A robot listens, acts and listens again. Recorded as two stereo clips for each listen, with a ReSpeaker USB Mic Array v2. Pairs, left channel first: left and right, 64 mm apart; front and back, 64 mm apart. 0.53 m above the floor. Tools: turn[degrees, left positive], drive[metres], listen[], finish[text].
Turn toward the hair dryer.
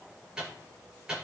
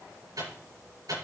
Action: listen[]
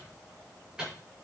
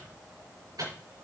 Action: listen[]
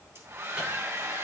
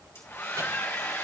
Thought: The hair dryer: 45° right.
Action: turn[-45]
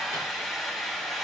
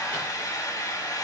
Action: finish[Facing the hair dryer, 2 to 4 m away.]